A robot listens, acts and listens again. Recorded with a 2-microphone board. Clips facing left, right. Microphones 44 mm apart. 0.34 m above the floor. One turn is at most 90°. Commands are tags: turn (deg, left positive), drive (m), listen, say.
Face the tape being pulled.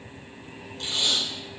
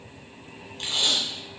<turn deg="-55"/>
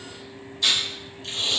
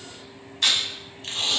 <turn deg="-70"/>
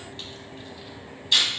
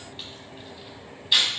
<turn deg="-10"/>
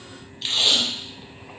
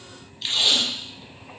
<say>Found it: tape being pulled, straight ahead.</say>